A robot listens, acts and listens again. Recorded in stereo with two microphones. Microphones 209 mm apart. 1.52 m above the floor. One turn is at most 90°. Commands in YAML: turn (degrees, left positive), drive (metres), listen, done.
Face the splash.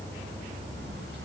listen: true
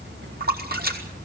turn: -50
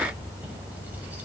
listen: true
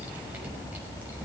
done: "I heard a splash, but can't make it out now. It was about straight ahead or 80° right."